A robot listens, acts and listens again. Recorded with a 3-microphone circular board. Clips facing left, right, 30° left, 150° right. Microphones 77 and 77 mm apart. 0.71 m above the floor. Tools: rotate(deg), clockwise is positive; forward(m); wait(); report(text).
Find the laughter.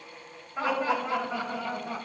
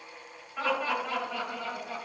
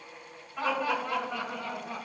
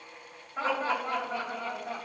rotate(-160)
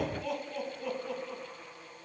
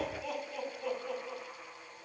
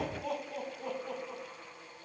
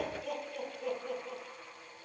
report("Facing the laughter.")